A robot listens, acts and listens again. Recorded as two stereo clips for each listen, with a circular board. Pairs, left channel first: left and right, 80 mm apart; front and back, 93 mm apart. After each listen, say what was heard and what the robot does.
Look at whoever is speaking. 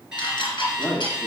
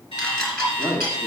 The man speaking: 25° left. Turn 25° left.
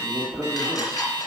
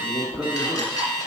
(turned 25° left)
The man speaking is now 10° right. Turn 10° right.
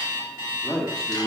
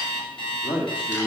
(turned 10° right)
Facing the man speaking, 1 to 2 m away.